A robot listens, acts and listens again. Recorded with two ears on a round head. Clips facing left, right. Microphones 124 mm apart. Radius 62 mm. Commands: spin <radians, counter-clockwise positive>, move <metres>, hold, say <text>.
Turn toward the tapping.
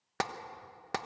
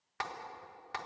spin 0.87
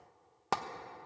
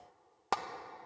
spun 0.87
say Found it: tapping, straight ahead.